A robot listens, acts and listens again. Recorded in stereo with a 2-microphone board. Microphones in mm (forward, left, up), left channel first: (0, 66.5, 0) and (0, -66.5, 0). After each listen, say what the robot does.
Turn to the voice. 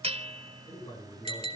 Turn 30° left.
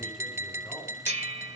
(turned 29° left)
Keep listening.
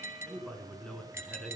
Facing the man speaking, over 4 m away.